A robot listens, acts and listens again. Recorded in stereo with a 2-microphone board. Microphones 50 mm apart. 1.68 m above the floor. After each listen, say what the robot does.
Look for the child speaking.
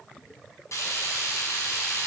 Keep listening.
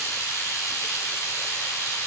Keep listening.
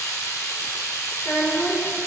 Turn 40° left.
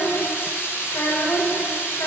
Turn 105° left.
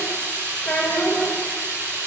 Turn 20° left.
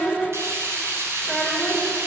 Facing the child speaking.